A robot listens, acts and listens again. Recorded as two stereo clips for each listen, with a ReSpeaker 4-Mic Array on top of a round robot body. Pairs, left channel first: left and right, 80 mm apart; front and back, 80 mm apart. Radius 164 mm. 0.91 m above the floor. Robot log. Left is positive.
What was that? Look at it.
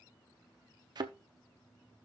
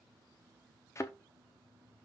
note: The thud: 55° right.
cmd yaw -55
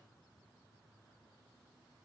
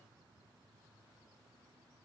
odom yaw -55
end: Facing where the thud came from. I can't hear it now.